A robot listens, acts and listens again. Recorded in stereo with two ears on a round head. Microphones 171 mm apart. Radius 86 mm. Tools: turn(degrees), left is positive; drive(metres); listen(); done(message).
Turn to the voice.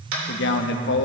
turn(degrees=65)
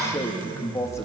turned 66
turn(degrees=15)
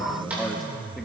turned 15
done("Found it: a man speaking, straight ahead.")